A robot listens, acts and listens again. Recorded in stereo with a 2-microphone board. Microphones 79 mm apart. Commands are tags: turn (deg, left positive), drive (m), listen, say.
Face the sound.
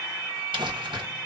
<turn deg="-90"/>
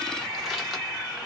<listen/>
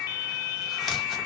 <say>Found it: crumpling, straight ahead, 1 to 2 m away.</say>